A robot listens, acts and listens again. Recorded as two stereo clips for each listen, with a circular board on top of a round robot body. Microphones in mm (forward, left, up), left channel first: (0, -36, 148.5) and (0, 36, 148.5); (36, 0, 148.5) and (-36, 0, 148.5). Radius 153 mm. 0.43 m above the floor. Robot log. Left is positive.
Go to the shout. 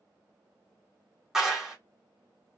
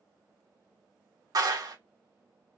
cmd idle
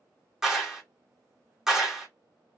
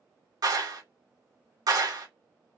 cmd idle
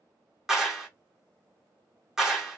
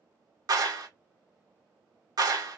end: I can't make out a shout, only a clap.